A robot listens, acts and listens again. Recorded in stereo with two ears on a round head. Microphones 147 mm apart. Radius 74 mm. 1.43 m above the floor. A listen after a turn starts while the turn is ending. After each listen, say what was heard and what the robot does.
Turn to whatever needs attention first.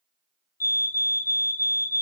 The fire alarm: about 15° left or 165° left. Turn 15° left.
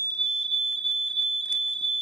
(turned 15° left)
Facing the fire alarm, 1 to 2 m away.